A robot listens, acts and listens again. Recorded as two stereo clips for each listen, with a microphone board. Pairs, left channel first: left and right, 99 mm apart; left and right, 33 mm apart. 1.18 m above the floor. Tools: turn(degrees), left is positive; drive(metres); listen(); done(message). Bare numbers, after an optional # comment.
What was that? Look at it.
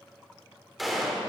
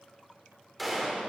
turn(-30)
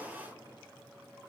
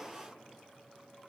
listen()
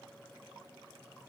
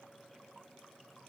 done("I heard a gunshot, but can't make it out now. It was about 25° left or 145° right.")